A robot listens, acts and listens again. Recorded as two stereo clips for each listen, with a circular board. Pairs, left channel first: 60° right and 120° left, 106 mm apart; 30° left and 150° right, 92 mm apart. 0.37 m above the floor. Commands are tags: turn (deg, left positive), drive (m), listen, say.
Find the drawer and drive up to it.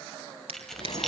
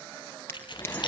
<turn deg="95"/>
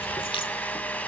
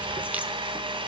<listen/>
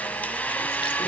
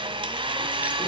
<listen/>
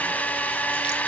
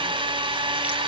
<say>I heard a drawer from this way, but can't make it out now. I did not reach it.</say>